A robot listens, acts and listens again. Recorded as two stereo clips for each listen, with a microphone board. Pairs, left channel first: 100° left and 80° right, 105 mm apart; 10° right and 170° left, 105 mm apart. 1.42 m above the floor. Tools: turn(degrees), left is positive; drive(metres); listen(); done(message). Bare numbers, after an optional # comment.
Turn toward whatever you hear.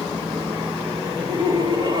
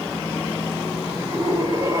# The laughter: 125° right.
turn(-125)
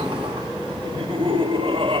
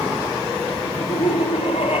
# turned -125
# The laughter is now 40° right.
turn(-40)
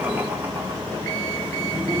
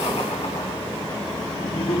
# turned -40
listen()
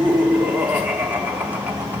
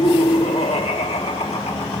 done("Found it: laughter, straight ahead.")